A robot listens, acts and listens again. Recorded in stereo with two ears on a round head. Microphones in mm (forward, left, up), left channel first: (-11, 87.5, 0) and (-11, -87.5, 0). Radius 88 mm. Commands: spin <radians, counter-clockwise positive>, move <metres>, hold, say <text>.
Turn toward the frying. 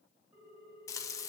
spin 0.35
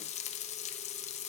spin 2.44
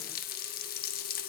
spin 0.87
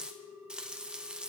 say Facing the frying, 1 to 2 m away.